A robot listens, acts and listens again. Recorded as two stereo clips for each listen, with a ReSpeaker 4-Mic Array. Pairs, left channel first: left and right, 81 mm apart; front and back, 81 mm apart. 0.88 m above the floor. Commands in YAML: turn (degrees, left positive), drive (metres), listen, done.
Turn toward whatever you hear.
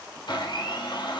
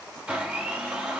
turn: 105
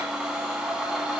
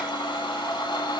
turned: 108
done: "Facing the blender."